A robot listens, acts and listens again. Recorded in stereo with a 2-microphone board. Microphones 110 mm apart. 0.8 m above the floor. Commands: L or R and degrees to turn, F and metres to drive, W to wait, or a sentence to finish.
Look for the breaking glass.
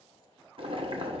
W
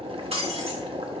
R65
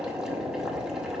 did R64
W
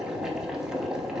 I heard breaking glass, but can't make it out now. It was about 5° right or 50° right.